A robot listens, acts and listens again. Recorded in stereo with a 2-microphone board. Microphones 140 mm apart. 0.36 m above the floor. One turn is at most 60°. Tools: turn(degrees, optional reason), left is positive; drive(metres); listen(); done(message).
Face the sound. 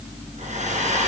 turn(degrees=-60, reason="The hair dryer: about 60° right or 120° right.")
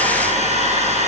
turn(degrees=-55, reason="So it is at 55° right.")
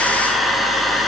done("Facing the hair dryer.")